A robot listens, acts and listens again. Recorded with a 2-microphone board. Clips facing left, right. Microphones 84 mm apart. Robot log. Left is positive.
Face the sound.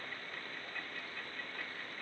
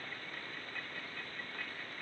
cmd idle
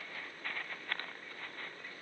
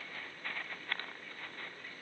cmd idle
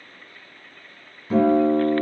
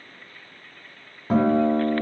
note: The guitar: about 60° right or 120° right.
cmd yaw -60
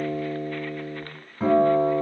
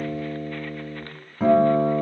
note: So it is at 15° right.
cmd yaw -15
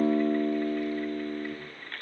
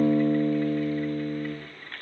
end: Found it: a guitar, straight ahead, under 1 m away.